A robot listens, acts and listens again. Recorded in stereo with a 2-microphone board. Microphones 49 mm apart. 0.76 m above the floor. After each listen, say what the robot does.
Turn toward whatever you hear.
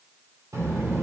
Turn 90° right.
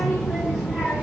Turn 15° right.
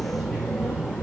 Turn 15° right.
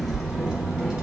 Turn 15° right.
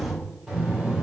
Turn 10° right.
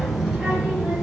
Found it: a child speaking, straight ahead.